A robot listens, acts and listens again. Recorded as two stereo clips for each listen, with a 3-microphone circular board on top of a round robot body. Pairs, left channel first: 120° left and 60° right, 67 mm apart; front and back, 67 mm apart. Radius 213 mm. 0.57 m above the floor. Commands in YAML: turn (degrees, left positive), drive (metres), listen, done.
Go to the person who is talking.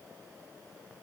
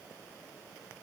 listen: true
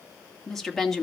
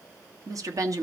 turn: -155
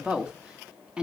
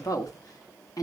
turn: 15
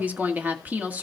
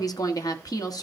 drive: 1.0
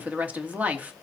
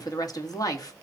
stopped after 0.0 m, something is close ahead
done: "Blocked. The woman speaking is further on, straight ahead."